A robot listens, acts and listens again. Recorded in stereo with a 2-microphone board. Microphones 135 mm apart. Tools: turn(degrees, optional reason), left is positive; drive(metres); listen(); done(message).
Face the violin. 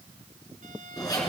listen()
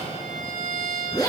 turn(degrees=-75, reason="The violin: about 75° right or 105° right.")
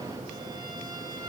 listen()
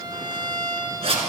turn(degrees=-30, reason="So it is at 30° right.")
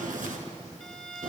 done("Found it: a violin, straight ahead, 1 to 2 m away.")